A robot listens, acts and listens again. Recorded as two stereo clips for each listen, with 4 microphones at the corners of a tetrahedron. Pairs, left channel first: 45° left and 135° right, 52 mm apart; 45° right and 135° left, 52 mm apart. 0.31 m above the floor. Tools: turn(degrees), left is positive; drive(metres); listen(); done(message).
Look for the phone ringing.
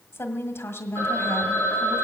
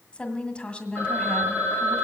turn(degrees=-170)
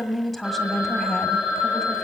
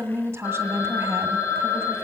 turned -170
turn(degrees=-60)
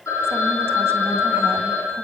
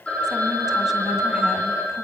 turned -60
turn(degrees=25)
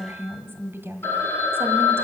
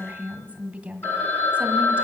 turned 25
done("Facing the phone ringing.")